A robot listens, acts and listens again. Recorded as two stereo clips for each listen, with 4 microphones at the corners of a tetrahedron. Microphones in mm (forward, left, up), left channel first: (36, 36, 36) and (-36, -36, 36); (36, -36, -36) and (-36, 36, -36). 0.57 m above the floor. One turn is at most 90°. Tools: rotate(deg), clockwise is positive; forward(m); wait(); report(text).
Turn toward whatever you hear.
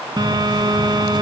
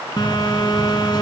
rotate(90)
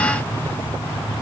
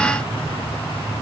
rotate(25)
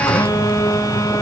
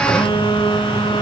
rotate(10)
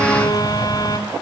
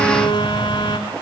report("Facing the phone buzzing, 2 to 4 m away.")